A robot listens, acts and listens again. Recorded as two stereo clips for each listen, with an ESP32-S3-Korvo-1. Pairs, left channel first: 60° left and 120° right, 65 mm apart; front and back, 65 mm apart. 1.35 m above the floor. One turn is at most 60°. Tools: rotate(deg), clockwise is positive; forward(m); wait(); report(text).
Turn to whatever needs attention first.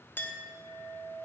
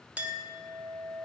wait()
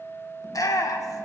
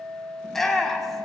rotate(-60)
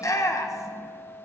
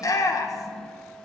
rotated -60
rotate(-25)
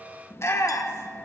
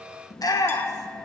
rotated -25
rotate(-15)
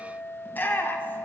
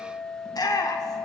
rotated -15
report("Found it: a shout, straight ahead, 1 to 2 m away.")